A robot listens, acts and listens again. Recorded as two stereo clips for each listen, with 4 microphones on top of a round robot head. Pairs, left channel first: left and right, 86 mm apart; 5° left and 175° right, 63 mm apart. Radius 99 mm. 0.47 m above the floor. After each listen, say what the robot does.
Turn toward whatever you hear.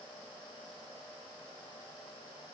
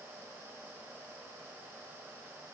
Keep listening.
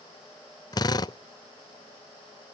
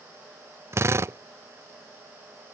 Turn 135° left.
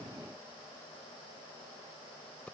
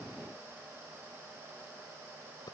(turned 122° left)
Turn 15° left.
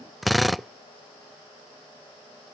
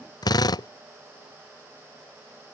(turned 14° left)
Facing the drill.